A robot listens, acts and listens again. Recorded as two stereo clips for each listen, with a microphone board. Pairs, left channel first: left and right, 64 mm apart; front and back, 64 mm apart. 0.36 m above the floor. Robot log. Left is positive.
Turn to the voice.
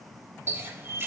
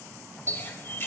cmd idle
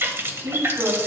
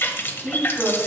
note: The woman speaking: 110° right.
cmd yaw -110
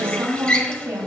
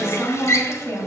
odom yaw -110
note: The woman speaking is now 45° right.
cmd yaw -45
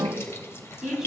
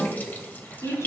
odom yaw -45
note: The woman speaking is now 10° right.
cmd yaw -10
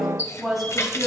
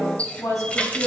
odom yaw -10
end: Facing the woman speaking, 2 to 4 m away.